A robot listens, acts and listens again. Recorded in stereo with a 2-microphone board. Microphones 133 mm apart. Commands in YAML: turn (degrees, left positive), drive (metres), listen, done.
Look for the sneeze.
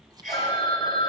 turn: -65
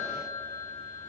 listen: true
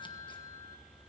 done: "I heard a sneeze, but can't make it out now. It was about straight ahead or 50° right."